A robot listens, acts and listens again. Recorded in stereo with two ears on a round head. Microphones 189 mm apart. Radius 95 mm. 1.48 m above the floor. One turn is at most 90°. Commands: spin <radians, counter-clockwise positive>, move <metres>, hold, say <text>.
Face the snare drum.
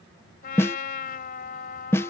spin 0.52
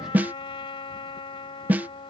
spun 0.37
spin -0.17
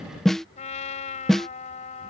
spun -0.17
say Found it: a snare drum, straight ahead.